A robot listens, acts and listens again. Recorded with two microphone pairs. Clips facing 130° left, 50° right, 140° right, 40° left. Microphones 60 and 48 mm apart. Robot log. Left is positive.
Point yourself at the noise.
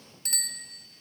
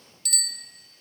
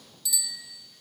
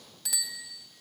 note: The bicycle bell: 75° left.
cmd yaw +75
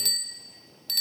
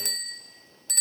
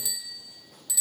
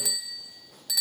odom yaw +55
note: The bicycle bell is now 20° left.
cmd yaw +20
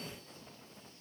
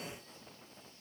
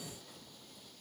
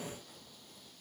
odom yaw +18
cmd idle
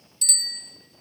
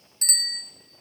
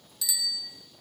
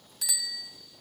end: Facing the bicycle bell, 2 to 4 m away.